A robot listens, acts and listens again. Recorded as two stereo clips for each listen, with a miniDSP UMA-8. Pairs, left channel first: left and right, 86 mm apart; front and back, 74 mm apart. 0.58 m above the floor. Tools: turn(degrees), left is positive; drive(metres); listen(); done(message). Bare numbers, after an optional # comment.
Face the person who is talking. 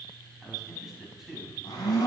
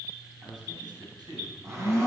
# The man speaking: 175° right.
turn(-175)
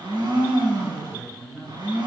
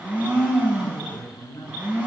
# The man speaking is now 40° right.
turn(-40)
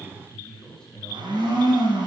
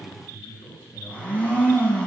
done("Found it: a man speaking, straight ahead.")